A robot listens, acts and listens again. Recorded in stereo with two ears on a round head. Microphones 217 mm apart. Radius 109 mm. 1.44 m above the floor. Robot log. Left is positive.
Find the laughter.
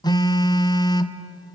cmd idle
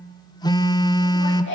note: The laughter: about 50° left or 130° left.
cmd yaw +50
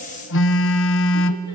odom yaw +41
cmd idle
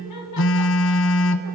note: So it is at 90° left.
cmd yaw +90
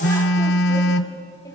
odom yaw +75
note: Nothing new. It was at 15° left.
cmd yaw +15
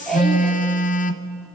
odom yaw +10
end: Facing the laughter, 2 to 4 m away.